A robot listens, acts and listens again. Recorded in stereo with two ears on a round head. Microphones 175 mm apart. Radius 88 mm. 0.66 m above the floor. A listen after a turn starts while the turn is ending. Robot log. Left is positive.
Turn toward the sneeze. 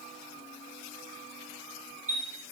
cmd idle
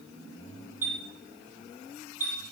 cmd idle
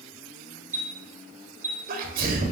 note: The sneeze: about 45° right or 135° right.
cmd yaw -45
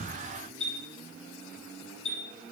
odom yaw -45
cmd idle
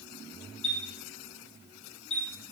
end: I heard a sneeze, but can't make it out now. It was about straight ahead or 90° right.